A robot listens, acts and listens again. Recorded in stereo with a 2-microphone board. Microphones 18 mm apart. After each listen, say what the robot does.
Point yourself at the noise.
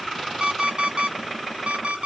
Turn 90° right.
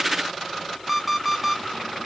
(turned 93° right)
Facing the alarm clock, 1 to 2 m away.